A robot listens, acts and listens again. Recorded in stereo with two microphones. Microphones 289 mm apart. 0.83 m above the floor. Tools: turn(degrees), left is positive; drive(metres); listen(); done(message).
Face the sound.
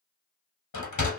turn(degrees=90)
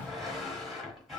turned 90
done("Facing the sliding door, under 1 m away.")